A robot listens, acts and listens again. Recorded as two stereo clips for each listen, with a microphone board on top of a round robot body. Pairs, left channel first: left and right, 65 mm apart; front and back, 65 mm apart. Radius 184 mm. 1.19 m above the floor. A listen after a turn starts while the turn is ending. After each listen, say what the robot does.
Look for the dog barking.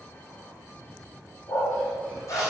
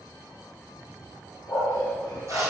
Turn 45° left.
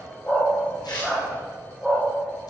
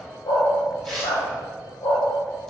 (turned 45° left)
Turn 10° left.
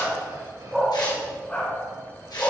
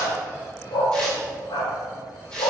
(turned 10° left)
Turn 25° left.
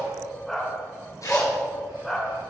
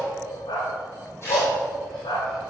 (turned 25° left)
Found it: a dog barking, straight ahead.